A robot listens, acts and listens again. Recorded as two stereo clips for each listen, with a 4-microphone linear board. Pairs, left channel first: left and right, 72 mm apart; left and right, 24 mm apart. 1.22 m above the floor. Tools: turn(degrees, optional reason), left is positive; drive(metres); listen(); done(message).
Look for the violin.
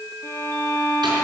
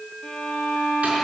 turn(degrees=40, reason="The violin: about 40° left or 140° left.")
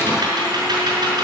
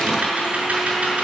listen()
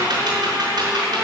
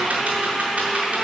listen()
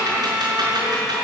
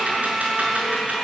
done("I heard a violin, but can't make it out now. It was about straight ahead or 100° left.")